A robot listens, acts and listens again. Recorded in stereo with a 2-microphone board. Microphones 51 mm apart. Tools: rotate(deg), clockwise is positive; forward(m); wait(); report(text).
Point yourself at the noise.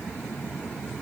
wait()
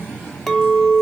rotate(-30)
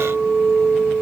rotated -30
rotate(25)
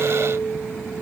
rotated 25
report("Found it: a clink, straight ahead.")